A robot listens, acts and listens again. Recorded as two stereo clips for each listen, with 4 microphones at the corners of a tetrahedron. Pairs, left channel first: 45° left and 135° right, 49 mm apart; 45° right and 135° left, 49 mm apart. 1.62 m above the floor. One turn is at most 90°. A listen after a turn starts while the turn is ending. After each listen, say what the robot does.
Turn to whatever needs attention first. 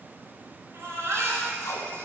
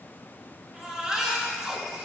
Turn 90° right.
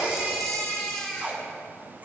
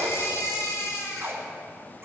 Turn 35° right.
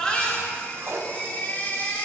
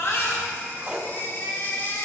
Facing the baby crying.